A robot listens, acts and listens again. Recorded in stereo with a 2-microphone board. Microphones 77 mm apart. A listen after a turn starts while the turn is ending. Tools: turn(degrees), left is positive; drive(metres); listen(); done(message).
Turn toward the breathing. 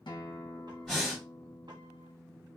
turn(degrees=30)
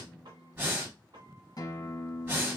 turn(degrees=-25)
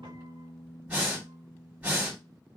turn(degrees=-20)
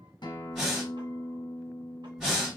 done("Found it: breathing, straight ahead.")